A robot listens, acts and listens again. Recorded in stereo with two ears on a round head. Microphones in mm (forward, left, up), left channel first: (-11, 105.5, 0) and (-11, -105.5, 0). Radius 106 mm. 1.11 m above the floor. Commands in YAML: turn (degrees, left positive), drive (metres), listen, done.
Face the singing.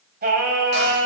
turn: -50
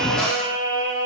turn: -50
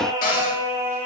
turn: -10
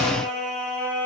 done: "Found it: singing, straight ahead."